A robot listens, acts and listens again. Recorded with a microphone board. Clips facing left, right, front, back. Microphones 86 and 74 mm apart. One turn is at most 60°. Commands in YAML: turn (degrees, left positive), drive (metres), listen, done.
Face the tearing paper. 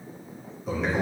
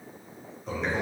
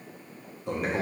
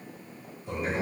listen: true
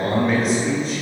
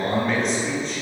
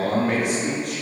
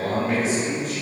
listen: true
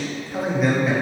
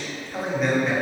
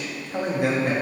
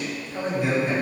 done: "I can't make out tearing paper to turn to."